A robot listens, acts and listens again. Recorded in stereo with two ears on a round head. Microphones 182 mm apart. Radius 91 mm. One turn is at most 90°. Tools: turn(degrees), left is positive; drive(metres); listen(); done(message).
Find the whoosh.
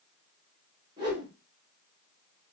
turn(degrees=-25)
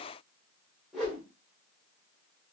done("Facing the whoosh.")